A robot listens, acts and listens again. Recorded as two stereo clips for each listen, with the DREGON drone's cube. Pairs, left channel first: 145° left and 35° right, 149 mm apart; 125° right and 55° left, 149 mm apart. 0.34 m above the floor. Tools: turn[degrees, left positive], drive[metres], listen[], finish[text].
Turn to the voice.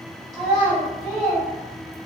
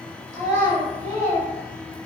Thought: The child speaking: 60° left.
Action: turn[60]
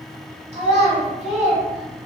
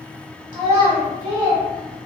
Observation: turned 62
Action: finish[Found it: a child speaking, straight ahead, 1 to 2 m away.]